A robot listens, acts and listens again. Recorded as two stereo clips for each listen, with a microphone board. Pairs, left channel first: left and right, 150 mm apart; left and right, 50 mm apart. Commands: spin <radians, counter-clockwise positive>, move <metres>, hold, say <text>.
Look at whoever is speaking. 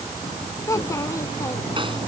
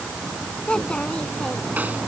spin 0.35
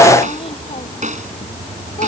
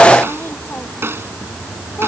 hold
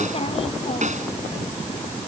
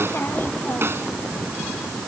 hold
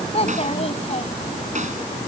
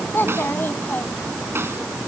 spin 2.44
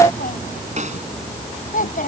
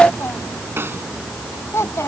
spin 1.13
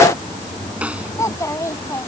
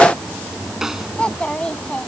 spin 0.35
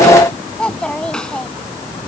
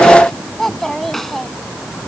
say Facing the child speaking.